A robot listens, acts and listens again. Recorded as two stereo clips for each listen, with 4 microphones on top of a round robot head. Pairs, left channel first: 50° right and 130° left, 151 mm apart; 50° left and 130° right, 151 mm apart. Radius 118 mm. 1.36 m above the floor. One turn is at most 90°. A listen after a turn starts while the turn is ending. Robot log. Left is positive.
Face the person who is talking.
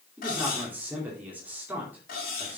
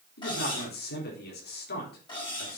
note: The man speaking: 50° left.
cmd yaw +50
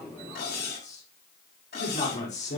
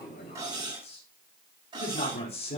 end: Found it: a man speaking, straight ahead, over 4 m away.